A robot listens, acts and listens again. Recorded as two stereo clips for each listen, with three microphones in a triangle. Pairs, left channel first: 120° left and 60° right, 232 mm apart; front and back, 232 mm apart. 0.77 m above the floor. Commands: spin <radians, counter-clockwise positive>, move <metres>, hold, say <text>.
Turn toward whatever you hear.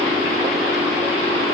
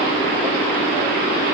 hold
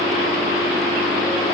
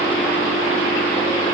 hold
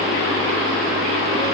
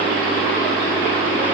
say I can't make out anything.